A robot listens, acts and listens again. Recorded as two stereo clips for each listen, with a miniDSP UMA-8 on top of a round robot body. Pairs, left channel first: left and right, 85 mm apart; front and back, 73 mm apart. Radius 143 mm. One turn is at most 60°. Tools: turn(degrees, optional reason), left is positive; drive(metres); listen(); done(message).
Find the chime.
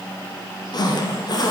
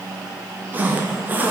listen()
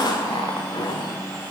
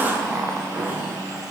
listen()
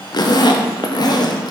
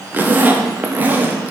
done("I can't make out a chime to turn to.")